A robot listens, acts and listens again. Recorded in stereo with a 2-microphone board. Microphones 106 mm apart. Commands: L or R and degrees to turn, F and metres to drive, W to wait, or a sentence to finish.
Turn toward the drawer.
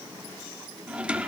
R30
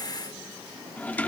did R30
L20
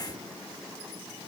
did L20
W
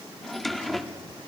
Found it: a drawer, straight ahead, 1 to 2 m away.